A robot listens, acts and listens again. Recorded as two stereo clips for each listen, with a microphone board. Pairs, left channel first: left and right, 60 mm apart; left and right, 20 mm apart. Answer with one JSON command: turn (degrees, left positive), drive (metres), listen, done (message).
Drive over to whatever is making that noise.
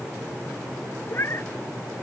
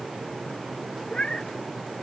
{"turn": 50}
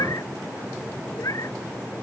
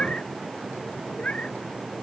{"turn": 80}
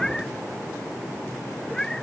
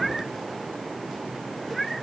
{"turn": 10}
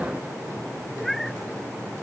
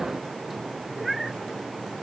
{"drive": 1.0}
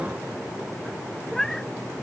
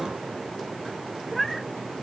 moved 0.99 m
{"drive": 1.0}
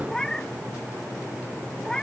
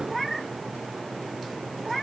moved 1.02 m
{"turn": 10}
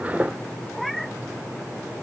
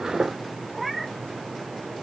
{"drive": 1.0}
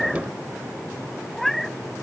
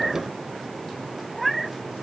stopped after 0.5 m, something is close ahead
{"done": "I am next to the cat meowing."}